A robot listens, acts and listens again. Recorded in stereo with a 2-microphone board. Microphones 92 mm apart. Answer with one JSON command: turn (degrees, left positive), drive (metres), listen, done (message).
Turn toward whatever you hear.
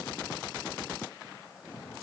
{"listen": true}
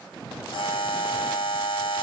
{"turn": 65}
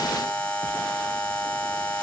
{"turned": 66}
{"turn": 15}
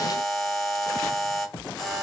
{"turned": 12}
{"done": "Facing the buzzer."}